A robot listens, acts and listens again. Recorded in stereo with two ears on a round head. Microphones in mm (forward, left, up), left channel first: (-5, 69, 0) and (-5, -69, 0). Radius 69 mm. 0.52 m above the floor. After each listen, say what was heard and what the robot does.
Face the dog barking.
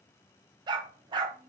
The dog barking: about 30° right or 150° right. Turn 30° right.
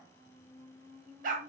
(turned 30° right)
So it is at 125° right. Turn 125° right.
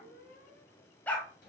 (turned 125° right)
The dog barking is now 10° left. Turn 10° left.
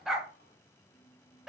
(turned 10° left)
Found it: a dog barking, straight ahead, under 1 m away.